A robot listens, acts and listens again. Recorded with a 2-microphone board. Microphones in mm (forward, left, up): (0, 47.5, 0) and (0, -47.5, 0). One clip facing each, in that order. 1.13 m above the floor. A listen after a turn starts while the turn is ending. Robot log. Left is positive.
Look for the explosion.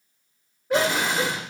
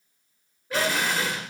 note: The explosion: about 25° left or 155° left.
cmd yaw +25
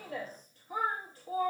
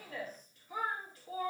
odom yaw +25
cmd idle
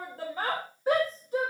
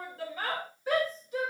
end: I heard an explosion, but can't make it out now. It was about straight ahead or 130° left.